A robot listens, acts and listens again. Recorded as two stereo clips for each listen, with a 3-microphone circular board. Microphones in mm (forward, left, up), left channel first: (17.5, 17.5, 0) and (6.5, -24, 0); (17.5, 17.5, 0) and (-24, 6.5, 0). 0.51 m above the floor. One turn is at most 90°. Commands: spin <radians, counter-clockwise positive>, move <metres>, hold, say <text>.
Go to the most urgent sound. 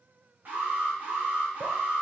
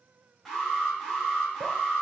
spin -1.13
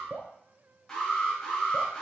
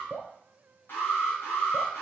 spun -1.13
move 1.0
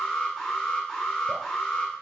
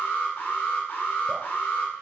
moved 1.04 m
move 1.0
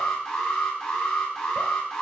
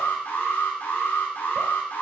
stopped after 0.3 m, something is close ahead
say Arrived at the alarm, straight ahead.